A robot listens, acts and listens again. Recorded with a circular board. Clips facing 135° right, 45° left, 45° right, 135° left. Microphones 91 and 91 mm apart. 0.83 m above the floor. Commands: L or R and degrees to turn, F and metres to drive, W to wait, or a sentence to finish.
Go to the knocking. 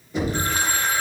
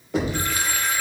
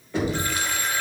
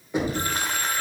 L60
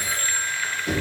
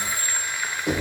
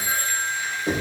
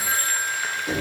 F1.0
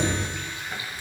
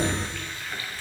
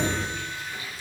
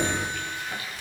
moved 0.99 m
F1.0
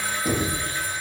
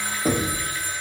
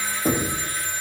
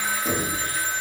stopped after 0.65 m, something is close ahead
Arrived at the knocking, straight ahead.